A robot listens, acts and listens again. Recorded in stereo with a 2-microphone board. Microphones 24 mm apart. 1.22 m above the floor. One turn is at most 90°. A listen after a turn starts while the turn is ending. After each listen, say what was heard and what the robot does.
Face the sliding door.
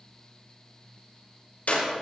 Keep listening.
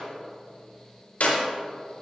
Keep listening.
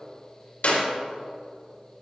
I can't make out a sliding door, only a clap.